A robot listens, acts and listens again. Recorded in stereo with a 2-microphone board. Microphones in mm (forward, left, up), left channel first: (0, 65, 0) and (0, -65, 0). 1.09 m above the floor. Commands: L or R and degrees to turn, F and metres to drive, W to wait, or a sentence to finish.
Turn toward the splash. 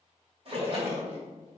R50
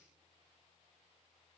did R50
W
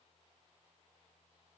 I heard a splash, but can't make it out now. It was about straight ahead or 80° right.